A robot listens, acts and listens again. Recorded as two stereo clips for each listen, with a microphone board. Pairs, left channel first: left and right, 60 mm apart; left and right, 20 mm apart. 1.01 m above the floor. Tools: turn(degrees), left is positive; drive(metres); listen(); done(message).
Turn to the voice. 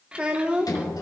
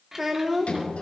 turn(degrees=-15)
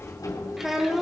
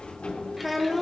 done("Facing the child speaking.")